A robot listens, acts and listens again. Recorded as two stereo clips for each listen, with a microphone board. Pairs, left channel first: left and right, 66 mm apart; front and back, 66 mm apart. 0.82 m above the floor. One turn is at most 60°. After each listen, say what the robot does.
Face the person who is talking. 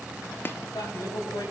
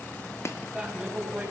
Turn 60° left.
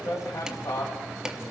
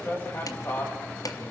Turn 55° left.
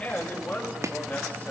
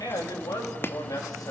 Turn 20° left.
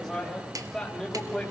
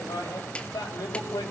Turn 10° left.
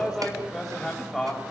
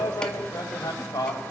Found it: a man speaking, straight ahead.